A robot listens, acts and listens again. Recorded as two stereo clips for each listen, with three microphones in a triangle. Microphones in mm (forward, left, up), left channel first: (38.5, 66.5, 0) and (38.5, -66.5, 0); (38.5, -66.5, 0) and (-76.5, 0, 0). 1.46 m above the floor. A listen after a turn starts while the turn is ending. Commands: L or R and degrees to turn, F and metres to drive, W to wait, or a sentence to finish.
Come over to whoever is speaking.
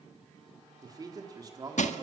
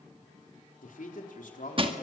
R30
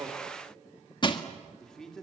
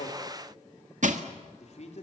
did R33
F1.0
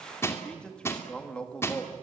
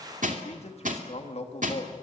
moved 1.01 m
F1.0
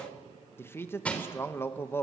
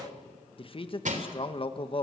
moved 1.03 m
L15
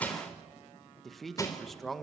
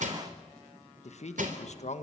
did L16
F1.0
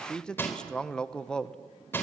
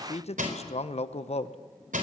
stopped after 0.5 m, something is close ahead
I am next to the man speaking.